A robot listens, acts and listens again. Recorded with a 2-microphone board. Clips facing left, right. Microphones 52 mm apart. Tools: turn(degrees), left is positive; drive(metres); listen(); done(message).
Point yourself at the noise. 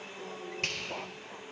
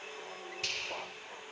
turn(degrees=50)
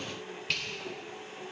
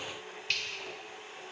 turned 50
done("Found it: a finger snap, straight ahead, 2 to 4 m away.")